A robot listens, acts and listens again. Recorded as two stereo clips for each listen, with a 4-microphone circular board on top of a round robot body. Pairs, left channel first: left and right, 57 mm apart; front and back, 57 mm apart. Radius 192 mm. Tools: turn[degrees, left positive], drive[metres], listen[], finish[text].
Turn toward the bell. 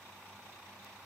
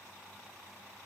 Action: listen[]
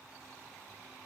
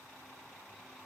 Action: listen[]
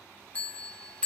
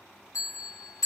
Thought: The bell: 25° left.
Action: turn[25]
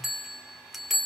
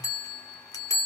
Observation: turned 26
Action: finish[Found it: a bell, straight ahead.]